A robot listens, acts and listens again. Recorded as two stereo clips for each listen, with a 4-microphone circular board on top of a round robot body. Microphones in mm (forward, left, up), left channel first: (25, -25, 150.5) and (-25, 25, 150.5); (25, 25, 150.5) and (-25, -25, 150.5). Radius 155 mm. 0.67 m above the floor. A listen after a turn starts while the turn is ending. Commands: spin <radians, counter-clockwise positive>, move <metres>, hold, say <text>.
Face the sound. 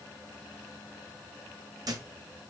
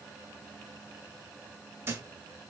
spin 2.88
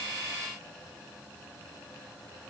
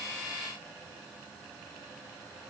say I heard a thud from this way, but can't make it out now.